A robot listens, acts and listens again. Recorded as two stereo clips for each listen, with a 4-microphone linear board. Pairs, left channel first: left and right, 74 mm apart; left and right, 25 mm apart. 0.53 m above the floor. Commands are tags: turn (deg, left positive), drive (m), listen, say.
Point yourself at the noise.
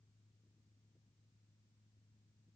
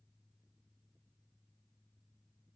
<listen/>
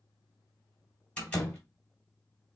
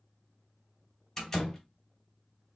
<turn deg="30"/>
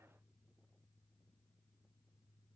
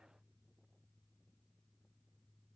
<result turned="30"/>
<listen/>
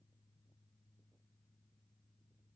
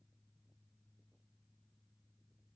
<say>I heard a door slam, but can't make it out now. It was about 15° right or 135° left.</say>